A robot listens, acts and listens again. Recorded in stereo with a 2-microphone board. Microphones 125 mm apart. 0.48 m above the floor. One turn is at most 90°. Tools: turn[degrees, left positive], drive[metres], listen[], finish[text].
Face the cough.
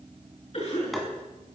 Thought: The cough: about 50° left or 130° left.
Action: turn[50]
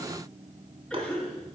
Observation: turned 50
Action: finish[Facing the cough, over 4 m away.]